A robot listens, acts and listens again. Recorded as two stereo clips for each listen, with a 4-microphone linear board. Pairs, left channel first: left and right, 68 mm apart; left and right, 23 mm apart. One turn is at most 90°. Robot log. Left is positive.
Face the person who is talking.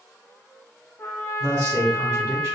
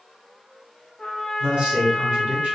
note: The man speaking: about 60° right or 120° right.
cmd yaw -60
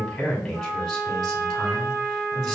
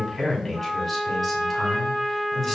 end: Found it: a man speaking, straight ahead, 1 to 2 m away.